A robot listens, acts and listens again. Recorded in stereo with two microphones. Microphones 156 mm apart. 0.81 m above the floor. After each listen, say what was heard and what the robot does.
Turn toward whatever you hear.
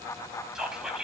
Turn 30° right.
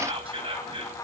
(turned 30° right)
So it is at 145° right. Turn 145° right.
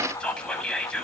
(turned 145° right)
Facing the whispering.